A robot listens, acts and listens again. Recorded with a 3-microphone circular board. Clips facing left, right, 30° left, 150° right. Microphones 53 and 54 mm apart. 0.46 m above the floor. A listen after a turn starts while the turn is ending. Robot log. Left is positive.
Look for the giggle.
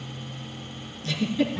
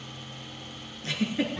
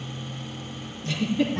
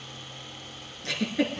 note: The giggle: 145° right.
cmd yaw -145
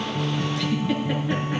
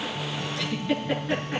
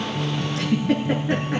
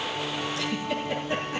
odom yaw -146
end: Facing the giggle, 2 to 4 m away.